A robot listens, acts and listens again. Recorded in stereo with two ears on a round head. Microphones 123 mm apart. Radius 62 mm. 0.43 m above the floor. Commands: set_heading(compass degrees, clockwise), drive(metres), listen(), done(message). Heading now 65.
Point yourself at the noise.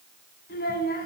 set_heading(355)
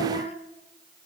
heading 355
set_heading(310)
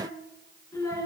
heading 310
set_heading(285)
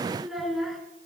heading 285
done("Facing the child speaking.")